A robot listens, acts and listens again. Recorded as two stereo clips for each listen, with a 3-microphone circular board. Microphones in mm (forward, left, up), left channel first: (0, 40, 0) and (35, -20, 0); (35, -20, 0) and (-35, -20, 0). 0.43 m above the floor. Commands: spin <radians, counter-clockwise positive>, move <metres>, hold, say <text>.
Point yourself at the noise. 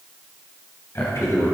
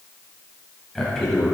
spin 1.48
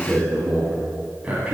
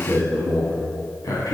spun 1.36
spin 0.26
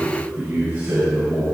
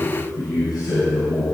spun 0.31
say Facing the man speaking.